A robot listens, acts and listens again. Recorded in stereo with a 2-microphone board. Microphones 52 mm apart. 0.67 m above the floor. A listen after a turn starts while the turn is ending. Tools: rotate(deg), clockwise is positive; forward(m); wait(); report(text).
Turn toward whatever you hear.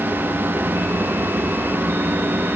wait()
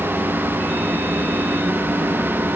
wait()
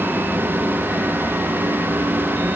report("I can't make out anything.")